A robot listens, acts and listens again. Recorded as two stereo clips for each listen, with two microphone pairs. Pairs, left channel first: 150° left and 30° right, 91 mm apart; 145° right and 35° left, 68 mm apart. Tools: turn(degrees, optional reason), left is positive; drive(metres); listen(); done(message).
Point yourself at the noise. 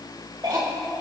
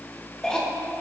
turn(degrees=-65, reason="The cough: 65° right.")
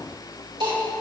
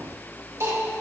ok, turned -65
done("Found it: a cough, straight ahead.")